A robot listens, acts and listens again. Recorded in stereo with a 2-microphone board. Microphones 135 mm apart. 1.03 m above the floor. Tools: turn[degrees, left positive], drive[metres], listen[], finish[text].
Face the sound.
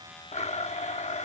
Thought: The blender: about 55° left or 125° left.
Action: turn[55]
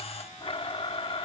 Thought: So it is at 50° left.
Action: turn[50]
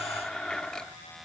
Action: finish[Facing the blender.]